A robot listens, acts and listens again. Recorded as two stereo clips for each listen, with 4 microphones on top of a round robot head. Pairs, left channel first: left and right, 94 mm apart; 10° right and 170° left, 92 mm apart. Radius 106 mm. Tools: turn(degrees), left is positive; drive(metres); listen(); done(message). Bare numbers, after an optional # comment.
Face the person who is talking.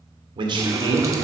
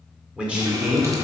# The man speaking: 125° right.
turn(-125)
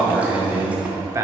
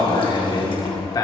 # The man speaking is now 40° right.
turn(-40)
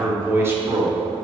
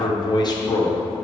# The man speaking is now 40° right.
turn(-40)
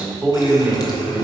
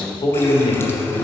# The man speaking is now 15° right.
turn(-15)
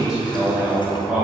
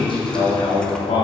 # The man speaking is now 10° right.
turn(-10)
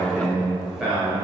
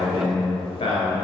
done("Facing the man speaking, 2 to 4 m away.")